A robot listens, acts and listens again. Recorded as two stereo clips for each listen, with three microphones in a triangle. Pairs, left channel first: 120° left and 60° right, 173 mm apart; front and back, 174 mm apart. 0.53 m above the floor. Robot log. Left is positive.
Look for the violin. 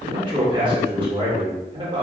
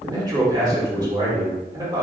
cmd idle
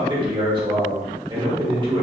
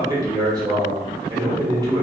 cmd idle
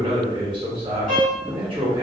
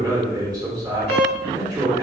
note: The violin: 20° right.
cmd yaw -20
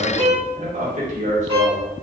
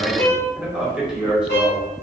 end: Facing the violin, 1 to 2 m away.